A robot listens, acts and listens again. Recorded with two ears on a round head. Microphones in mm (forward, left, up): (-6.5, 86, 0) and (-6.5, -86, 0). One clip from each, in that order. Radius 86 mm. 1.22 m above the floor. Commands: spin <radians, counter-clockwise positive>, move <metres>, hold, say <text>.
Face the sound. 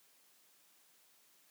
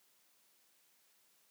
hold
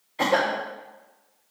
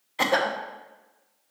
spin -0.52
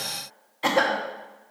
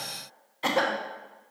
say Found it: a cough, straight ahead.